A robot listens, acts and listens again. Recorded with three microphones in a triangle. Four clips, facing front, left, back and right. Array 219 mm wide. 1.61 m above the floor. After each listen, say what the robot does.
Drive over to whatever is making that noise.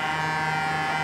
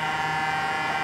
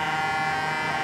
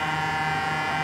Keep listening.
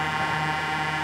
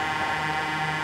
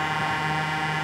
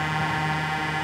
Keep listening.
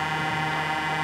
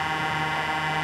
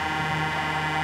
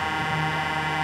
I can't make out anything to turn to.